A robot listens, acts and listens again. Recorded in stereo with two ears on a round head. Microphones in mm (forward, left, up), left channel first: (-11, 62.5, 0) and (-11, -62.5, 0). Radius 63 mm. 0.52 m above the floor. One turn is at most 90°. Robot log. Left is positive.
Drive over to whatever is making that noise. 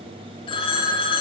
note: The phone ringing: about 40° left or 140° left.
cmd yaw +40
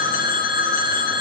note: So it is at 105° left.
cmd yaw +90
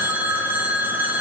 note: The phone ringing is now 15° right.
cmd yaw -15
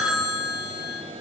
cmd fwd 1.0
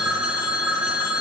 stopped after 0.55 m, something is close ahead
note: The phone ringing is now 10° right.
cmd yaw -10
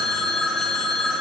end: Blocked. The phone ringing is further on, straight ahead.